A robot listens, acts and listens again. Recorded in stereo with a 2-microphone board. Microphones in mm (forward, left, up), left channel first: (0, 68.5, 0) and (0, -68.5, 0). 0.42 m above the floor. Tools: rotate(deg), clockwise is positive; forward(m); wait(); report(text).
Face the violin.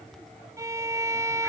rotate(25)
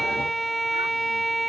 report("Found it: a violin, straight ahead.")